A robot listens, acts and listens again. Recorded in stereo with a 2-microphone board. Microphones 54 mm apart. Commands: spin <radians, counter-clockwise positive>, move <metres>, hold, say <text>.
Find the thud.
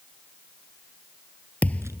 spin 0.52
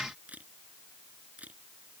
hold
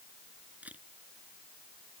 say I heard a thud, but can't make it out now. It was about straight ahead or 120° left.